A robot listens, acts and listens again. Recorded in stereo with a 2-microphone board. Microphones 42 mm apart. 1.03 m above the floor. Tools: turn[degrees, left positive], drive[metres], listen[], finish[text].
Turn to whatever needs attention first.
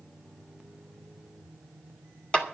Action: listen[]
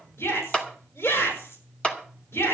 Action: turn[90]
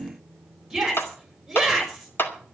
Thought: So it is at 10° right.
Action: turn[-10]
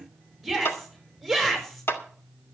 Action: finish[Facing the shout.]